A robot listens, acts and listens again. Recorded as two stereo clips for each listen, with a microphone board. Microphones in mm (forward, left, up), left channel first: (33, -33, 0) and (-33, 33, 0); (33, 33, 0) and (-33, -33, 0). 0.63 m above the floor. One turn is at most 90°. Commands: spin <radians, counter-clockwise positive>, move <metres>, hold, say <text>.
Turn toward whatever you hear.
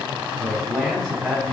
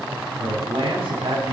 spin -1.57
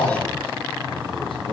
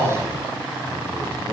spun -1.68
spin -0.70
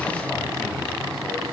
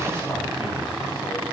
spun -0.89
spin 0.17
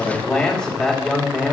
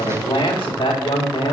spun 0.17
spin 0.70
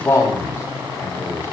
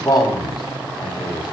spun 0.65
say Found it: a man speaking, straight ahead.